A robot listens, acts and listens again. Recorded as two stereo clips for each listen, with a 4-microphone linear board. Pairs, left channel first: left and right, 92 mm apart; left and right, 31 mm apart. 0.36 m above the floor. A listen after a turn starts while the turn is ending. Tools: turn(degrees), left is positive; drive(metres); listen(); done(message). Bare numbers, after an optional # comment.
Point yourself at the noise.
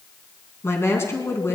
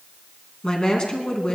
# The woman speaking: about 30° left or 150° left.
turn(30)
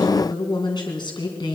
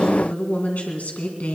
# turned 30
# So it is at 120° left.
turn(120)
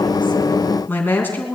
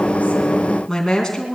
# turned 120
# The woman speaking is now 25° left.
turn(25)
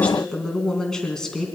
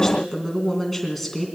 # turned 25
done("Found it: a woman speaking, straight ahead.")